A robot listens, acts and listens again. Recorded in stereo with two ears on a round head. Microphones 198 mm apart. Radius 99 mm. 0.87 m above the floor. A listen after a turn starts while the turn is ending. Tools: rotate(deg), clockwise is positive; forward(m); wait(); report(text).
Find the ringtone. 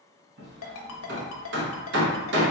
rotate(-65)
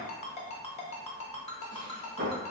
rotate(-30)
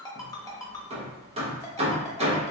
rotate(-15)
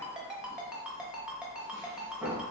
report("Facing the ringtone, under 1 m away.")